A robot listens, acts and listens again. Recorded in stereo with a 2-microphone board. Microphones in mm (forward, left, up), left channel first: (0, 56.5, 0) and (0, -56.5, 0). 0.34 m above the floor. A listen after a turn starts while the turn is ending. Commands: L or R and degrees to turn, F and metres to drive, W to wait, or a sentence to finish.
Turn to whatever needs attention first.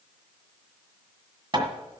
W
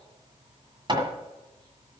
W
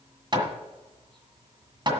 I can't make out anything urgent, only hammering.